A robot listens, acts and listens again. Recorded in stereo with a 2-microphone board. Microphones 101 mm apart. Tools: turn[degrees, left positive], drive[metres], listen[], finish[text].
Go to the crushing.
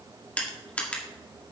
Action: turn[30]
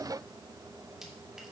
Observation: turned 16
Action: listen[]
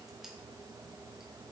Action: listen[]
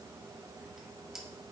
Action: finish[I heard crushing, but can't make it out now. It was about straight ahead or 150° left. I did not reach it.]